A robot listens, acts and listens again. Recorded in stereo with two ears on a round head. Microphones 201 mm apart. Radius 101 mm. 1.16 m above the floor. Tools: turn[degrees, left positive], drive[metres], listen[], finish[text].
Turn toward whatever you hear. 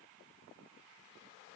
Action: listen[]
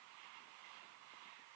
Action: listen[]
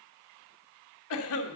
Thought: The cough: about 75° left or 105° left.
Action: turn[75]
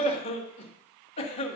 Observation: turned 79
Thought: So it is at 25° left.
Action: turn[25]
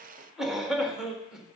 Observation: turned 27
Action: finish[Facing the cough.]